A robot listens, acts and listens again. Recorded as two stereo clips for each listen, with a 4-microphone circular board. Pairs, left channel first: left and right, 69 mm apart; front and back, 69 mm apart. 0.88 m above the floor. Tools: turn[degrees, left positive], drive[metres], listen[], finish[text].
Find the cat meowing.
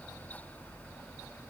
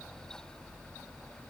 Action: listen[]
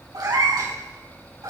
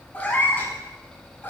Thought: The cat meowing: 60° right.
Action: turn[-60]
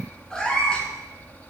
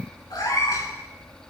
Thought: The cat meowing is now 15° left.
Action: turn[15]
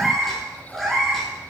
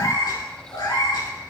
Action: finish[Found it: a cat meowing, straight ahead, over 4 m away.]